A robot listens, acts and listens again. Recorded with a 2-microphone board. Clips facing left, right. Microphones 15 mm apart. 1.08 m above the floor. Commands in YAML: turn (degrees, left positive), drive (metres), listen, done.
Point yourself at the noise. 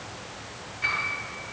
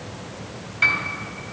turn: -90
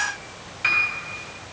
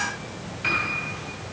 turn: 10
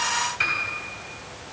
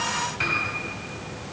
done: "Found it: a piano, straight ahead, 2 to 4 m away."